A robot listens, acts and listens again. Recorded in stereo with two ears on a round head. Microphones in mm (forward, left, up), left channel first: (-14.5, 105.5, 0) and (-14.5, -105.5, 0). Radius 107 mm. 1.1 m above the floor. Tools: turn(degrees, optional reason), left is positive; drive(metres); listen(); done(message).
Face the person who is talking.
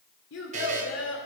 turn(degrees=55, reason="The child speaking: about 55° left or 125° left.")
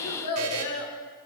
turn(degrees=75, reason="So it is at 75° left.")
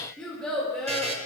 done("Found it: a child speaking, straight ahead, 1 to 2 m away.")